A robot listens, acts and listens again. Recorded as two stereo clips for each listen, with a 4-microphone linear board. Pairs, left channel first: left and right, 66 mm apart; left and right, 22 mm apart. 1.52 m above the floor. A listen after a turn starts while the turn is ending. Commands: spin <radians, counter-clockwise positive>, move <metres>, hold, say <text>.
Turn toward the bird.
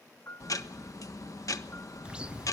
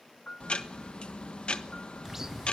spin -0.26
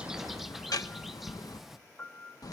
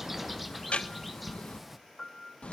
say Facing the bird, under 1 m away.